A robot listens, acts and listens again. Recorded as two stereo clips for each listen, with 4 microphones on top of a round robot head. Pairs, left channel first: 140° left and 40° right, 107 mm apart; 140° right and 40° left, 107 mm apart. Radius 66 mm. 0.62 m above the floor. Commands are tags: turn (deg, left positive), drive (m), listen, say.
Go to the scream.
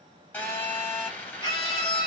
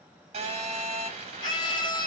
<turn deg="180"/>
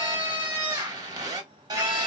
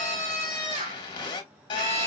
<turn deg="25"/>
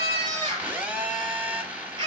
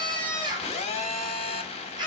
<drive m="1.0"/>
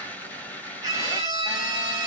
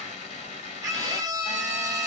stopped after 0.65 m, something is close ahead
<say>I am next to the scream.</say>